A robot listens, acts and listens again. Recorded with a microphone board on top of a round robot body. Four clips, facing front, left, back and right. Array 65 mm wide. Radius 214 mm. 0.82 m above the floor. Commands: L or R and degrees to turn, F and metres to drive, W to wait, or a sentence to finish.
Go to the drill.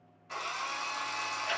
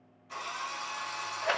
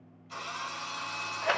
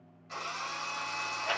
R10
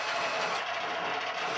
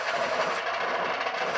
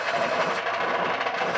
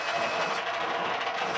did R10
W
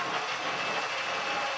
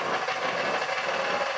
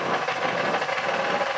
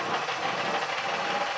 W
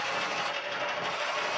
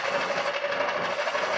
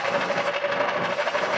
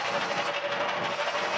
Facing where the drill came from. I can't hear it now. I did not reach it.